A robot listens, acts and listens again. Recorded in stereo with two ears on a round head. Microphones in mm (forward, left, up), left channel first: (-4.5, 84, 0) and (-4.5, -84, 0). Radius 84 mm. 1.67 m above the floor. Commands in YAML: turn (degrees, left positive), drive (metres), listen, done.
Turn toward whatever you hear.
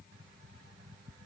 listen: true
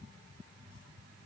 listen: true
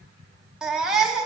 turn: -30
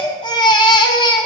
turn: 25
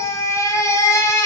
turn: 20
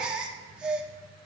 done: "Facing the baby crying."